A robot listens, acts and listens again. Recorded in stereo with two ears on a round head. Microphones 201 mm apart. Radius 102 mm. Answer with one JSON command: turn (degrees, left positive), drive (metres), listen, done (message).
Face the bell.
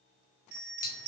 {"turn": -45}
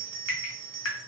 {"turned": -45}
{"turn": -85}
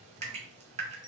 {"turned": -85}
{"turn": 15}
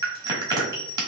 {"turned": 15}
{"done": "Found it: a bell, straight ahead, 1 to 2 m away."}